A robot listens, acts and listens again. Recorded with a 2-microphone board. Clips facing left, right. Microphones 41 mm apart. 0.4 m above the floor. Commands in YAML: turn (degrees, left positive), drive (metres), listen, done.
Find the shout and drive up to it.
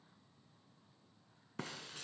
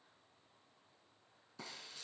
listen: true
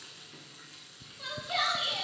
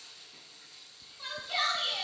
turn: 30
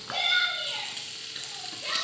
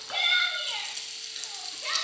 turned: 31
turn: -15
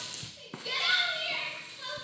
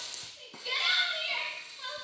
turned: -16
drive: 1.0
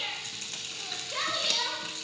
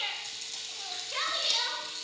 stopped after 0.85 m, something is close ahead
done: "I am next to the shout."